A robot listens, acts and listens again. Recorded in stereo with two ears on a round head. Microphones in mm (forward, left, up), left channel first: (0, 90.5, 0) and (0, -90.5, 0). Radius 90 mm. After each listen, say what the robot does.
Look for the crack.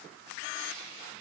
Keep listening.
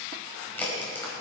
Turn 30° left.
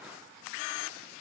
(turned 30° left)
Keep listening.
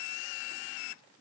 I heard a crack, but can't make it out now. It was about 20° right or 140° left.